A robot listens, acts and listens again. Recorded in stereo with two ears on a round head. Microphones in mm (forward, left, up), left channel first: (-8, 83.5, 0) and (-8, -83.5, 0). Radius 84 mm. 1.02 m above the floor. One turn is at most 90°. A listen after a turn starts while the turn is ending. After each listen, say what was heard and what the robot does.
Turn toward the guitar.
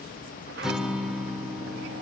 Turn 30° right.
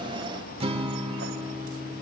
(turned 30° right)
So it is at 145° right. Turn 90° right.
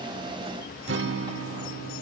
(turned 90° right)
The guitar is now 85° right. Turn 85° right.
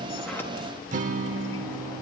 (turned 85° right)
The guitar is now 45° right. Turn 45° right.
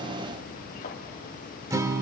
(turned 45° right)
The guitar is now 20° right. Turn 20° right.
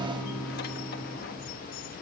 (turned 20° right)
Found it: a guitar, straight ahead, 1 to 2 m away.